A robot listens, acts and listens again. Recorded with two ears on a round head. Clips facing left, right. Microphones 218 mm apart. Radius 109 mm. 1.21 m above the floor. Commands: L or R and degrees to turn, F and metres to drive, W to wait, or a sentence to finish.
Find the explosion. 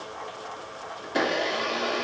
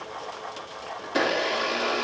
W
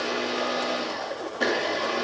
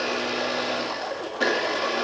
W
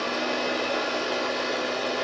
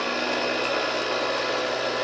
I can't make out an explosion to turn to.